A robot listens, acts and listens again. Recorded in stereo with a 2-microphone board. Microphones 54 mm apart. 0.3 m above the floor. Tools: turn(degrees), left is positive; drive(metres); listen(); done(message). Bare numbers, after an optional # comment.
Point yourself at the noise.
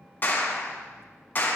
# The clap: about 35° left or 145° left.
turn(35)
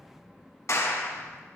# So it is at 105° left.
turn(105)
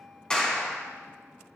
# The clap is now 15° left.
turn(15)
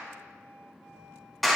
done("Found it: a clap, straight ahead, 2 to 4 m away.")